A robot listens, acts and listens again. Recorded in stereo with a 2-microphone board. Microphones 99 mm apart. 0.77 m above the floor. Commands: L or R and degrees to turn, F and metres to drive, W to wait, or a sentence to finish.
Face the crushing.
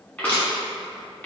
L15
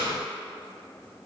W
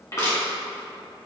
L145
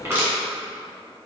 R25
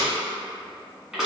Found it: crushing, straight ahead.